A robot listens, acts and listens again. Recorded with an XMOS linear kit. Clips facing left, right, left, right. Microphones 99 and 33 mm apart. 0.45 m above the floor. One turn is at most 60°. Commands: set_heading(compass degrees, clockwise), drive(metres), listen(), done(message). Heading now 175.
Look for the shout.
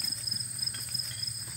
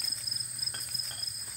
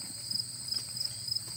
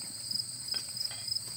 listen()
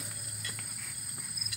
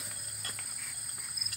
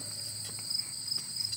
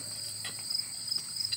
listen()
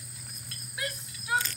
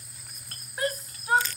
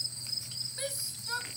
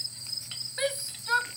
set_heading(215)
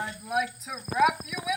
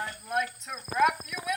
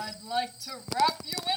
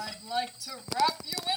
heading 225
done("Facing the shout.")